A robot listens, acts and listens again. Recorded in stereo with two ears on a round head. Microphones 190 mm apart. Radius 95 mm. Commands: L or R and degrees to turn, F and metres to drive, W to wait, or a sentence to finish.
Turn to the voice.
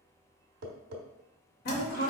L50
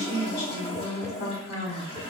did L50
L75
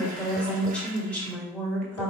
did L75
Found it: a woman speaking, straight ahead, 1 to 2 m away.